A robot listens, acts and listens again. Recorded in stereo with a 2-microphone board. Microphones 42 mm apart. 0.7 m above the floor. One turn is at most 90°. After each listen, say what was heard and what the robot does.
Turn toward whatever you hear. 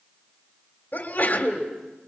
The sneeze: about 45° left or 135° left. Turn 45° left.
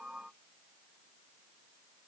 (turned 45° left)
Keep listening.
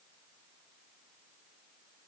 I heard a sneeze, but can't make it out now. It was about straight ahead or 90° left.